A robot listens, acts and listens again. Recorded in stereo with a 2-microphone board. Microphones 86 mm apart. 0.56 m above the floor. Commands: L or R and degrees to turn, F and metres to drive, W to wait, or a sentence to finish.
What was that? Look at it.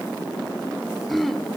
L30
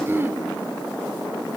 R30
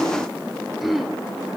Facing the throat clearing.